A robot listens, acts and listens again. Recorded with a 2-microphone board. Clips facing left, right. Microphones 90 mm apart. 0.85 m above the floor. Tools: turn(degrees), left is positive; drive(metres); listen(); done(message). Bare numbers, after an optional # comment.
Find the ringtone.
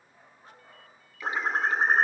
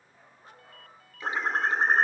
# The ringtone: about 65° right or 115° right.
turn(-65)
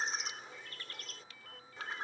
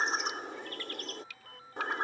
# So it is at 45° right.
turn(-45)
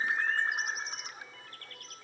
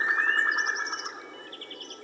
listen()
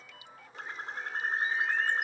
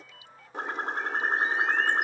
done("Found it: a ringtone, straight ahead.")